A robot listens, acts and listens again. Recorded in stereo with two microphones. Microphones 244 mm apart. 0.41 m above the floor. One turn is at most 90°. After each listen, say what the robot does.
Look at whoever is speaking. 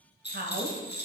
Turn 45° right.
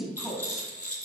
Found it: a woman speaking, straight ahead.